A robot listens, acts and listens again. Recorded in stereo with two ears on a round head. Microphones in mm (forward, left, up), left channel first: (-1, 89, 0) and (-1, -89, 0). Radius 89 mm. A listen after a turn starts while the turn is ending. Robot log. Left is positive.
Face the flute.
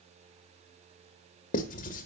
cmd idle
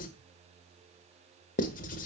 cmd idle
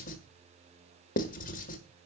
end: I can't make out a flute to turn to.